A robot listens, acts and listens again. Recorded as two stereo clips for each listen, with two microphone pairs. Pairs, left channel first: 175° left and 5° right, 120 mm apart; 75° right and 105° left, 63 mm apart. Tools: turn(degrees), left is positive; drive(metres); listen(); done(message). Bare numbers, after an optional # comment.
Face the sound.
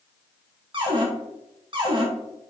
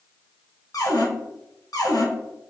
# The cupboard door: 55° right.
turn(-55)
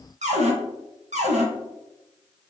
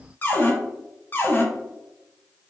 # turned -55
# The cupboard door is now 15° right.
turn(-15)
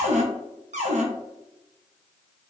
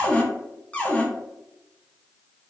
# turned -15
done("Facing the cupboard door.")